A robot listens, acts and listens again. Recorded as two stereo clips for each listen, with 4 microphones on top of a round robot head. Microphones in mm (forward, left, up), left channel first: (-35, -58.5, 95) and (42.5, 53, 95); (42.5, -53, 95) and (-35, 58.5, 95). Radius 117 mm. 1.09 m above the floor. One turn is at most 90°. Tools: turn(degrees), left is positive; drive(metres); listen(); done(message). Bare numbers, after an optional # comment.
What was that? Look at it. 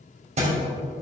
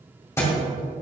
# The thud: 15° left.
turn(15)
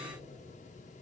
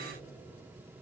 done("Facing where the thud came from. I can't hear it now.")